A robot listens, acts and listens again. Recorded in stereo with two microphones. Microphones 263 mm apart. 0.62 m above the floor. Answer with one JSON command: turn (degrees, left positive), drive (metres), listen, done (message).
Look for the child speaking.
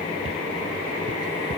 {"listen": true}
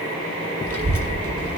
{"turn": -60}
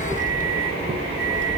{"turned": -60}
{"turn": -45}
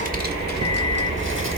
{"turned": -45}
{"turn": -50}
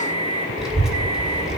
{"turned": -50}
{"done": "Found it: a child speaking, straight ahead, 1 to 2 m away."}